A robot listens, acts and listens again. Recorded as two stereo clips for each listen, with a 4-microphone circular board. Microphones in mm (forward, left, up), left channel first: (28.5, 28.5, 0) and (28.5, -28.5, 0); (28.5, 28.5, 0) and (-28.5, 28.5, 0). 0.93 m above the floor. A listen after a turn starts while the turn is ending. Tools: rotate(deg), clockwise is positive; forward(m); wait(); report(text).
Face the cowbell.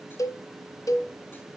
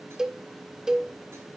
rotate(-105)
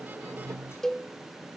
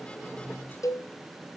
rotate(-10)
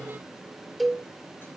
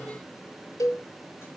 report("Facing the cowbell.")